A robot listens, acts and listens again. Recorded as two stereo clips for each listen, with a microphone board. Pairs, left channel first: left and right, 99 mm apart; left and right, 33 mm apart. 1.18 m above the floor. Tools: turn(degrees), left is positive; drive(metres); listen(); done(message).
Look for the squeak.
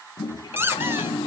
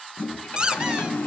turn(degrees=-25)
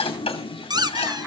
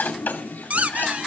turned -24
turn(degrees=-130)
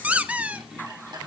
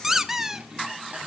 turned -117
turn(degrees=-15)
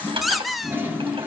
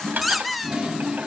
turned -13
done("Found it: a squeak, straight ahead, under 1 m away.")